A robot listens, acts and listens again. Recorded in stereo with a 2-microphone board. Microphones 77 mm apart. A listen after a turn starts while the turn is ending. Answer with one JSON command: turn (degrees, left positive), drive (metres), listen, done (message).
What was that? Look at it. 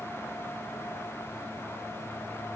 {"listen": true}
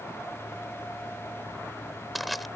{"turn": 30}
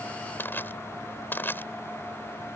{"turn": 150}
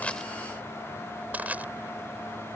{"turn": -20}
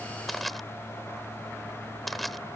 {"done": "Facing the crushing."}